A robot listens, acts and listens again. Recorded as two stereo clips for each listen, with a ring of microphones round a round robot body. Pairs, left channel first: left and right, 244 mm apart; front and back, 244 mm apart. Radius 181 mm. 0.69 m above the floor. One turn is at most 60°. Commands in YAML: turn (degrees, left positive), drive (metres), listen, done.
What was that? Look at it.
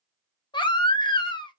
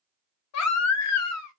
turn: 15
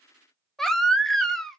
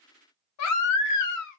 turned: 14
done: "Facing the baby crying, under 1 m away."